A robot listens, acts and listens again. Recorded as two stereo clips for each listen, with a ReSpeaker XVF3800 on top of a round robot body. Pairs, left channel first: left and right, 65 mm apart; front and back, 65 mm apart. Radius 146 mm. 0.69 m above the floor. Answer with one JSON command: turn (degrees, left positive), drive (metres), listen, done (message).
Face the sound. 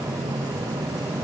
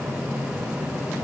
{"listen": true}
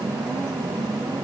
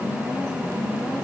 {"listen": true}
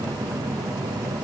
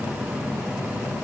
{"done": "I can't make out anything to turn to."}